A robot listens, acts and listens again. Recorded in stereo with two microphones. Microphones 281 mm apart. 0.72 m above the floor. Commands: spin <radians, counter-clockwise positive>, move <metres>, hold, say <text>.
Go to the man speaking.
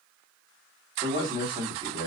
spin -0.26
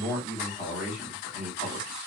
move 1.0
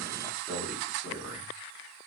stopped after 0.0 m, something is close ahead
say Blocked. The man speaking is further on, straight ahead.